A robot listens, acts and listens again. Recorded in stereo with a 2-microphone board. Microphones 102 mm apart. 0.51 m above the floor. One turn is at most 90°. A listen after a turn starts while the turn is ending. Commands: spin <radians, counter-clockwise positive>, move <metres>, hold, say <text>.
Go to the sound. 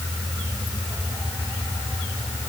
hold
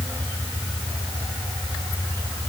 hold
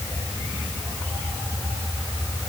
say I can't make out anything.